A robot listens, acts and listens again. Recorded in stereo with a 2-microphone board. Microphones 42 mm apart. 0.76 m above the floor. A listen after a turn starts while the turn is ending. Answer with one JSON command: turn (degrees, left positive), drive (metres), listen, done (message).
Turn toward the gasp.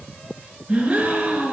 {"turn": -30}
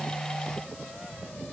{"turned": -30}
{"listen": true}
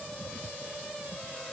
{"done": "I heard a gasp, but can't make it out now. It was about straight ahead or 120° right."}